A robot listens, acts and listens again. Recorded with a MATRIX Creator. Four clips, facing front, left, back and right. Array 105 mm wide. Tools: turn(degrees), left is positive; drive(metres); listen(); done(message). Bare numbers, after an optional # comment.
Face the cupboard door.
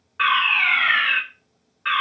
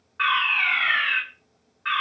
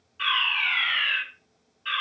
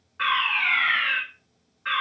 listen()
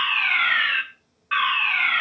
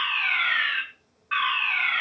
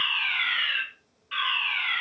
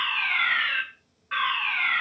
listen()
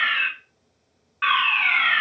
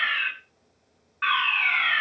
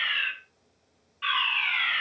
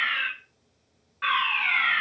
done("I can't make out a cupboard door to turn to.")